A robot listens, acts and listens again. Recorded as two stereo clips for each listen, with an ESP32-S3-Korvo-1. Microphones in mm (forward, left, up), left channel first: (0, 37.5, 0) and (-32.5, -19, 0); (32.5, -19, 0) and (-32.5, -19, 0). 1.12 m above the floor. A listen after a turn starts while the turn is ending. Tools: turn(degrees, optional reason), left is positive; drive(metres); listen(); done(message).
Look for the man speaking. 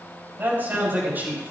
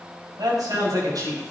turn(degrees=180, reason="The man speaking: straight behind.")
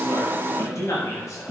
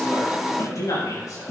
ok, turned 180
turn(degrees=30, reason="The man speaking is now 30° left.")
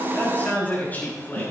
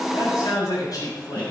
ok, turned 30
done("Facing the man speaking.")